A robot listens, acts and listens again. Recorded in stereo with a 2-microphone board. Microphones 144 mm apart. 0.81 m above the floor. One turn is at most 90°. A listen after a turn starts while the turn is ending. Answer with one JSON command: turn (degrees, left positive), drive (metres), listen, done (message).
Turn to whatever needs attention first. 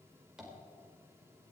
{"listen": true}
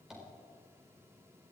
{"listen": true}
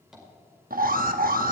{"turn": -70}
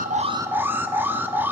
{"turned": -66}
{"turn": -15}
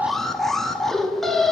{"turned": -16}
{"done": "Facing the alarm."}